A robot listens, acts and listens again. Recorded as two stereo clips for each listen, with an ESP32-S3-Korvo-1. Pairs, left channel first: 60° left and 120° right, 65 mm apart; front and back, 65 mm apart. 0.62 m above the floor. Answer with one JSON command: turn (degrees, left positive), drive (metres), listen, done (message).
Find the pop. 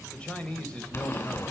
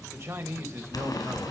{"turn": 15}
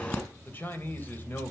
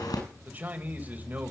{"done": "Found it: a pop, straight ahead, over 4 m away."}